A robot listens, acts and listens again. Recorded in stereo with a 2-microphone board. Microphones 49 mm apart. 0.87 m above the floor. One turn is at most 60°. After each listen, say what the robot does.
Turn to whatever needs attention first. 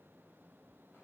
Keep listening.
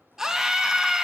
Turn 30° right.
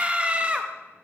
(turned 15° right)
Turn 60° right.
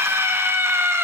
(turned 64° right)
Turn 60° right.
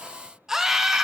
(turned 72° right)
Turn 10° right.
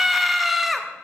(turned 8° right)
Found it: a scream, straight ahead.